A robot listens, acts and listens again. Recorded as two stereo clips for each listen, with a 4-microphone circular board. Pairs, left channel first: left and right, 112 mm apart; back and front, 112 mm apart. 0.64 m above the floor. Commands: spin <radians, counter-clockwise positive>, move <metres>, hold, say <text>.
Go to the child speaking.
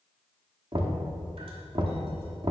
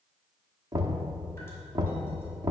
hold
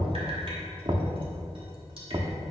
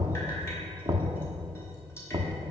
hold
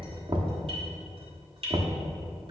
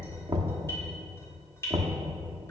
say I can't make out a child speaking to turn to.